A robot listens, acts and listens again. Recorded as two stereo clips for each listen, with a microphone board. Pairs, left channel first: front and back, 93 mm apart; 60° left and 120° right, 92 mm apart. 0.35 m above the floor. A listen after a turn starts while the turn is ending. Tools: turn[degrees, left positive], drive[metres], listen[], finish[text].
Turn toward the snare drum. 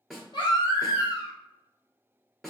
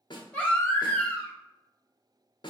Thought: The snare drum: 90° left.
Action: turn[90]
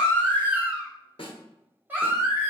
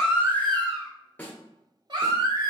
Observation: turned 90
Thought: The snare drum is now 10° right.
Action: turn[-10]
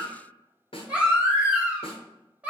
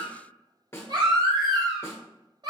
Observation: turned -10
Action: finish[Facing the snare drum, 1 to 2 m away.]